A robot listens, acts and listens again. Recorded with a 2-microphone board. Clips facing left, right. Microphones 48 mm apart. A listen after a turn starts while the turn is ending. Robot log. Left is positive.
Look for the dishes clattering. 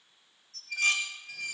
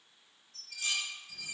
note: The dishes clattering: about 65° left or 115° left.
cmd yaw +65
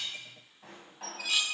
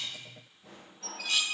end: Found it: dishes clattering, straight ahead, 1 to 2 m away.